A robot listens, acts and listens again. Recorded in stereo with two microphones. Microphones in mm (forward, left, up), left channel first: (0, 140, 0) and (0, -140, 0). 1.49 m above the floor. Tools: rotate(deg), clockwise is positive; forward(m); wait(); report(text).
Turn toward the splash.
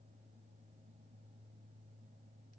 wait()
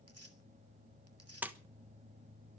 rotate(30)
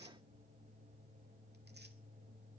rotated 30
wait()
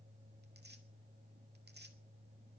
report("I heard a splash, but can't make it out now. It was about 25° left or 145° right.")